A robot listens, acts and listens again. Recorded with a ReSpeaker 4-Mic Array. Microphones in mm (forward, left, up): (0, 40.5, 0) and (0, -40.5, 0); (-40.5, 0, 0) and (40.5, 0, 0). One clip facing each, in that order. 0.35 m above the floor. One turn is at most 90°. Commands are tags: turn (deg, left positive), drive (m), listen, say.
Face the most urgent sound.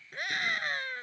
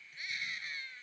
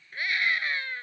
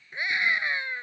<turn deg="70"/>
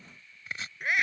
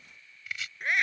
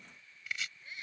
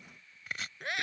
<say>Facing the scream.</say>